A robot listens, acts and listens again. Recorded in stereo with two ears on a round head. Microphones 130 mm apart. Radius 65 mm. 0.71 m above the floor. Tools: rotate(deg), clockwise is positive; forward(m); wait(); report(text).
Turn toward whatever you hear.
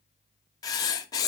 rotate(-25)
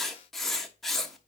report("Facing the writing.")